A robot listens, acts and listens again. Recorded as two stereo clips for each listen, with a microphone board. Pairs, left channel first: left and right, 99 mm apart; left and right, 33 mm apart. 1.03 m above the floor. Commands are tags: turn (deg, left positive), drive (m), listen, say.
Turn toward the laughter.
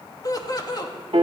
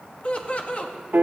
<turn deg="45"/>
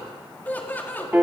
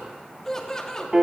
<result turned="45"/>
<turn deg="20"/>
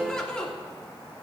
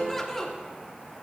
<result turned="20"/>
<turn deg="10"/>
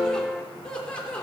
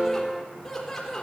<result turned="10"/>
<turn deg="10"/>
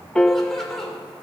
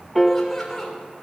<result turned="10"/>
<say>Facing the laughter, over 4 m away.</say>